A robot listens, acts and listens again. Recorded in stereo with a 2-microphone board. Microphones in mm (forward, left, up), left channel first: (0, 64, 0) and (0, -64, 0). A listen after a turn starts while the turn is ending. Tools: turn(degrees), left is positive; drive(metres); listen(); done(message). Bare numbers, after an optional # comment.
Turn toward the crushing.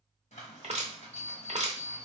# The crushing: about 55° right or 125° right.
turn(-55)
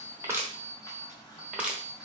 done("Facing the crushing.")